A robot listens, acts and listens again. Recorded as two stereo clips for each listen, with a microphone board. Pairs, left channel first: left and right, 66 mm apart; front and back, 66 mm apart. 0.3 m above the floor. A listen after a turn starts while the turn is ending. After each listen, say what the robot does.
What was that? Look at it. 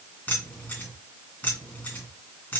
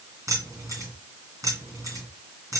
Turn 155° left.
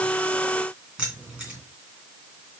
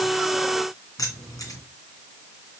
Turn 15° right.
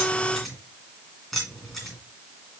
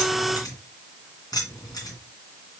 Facing the keys jangling, 2 to 4 m away.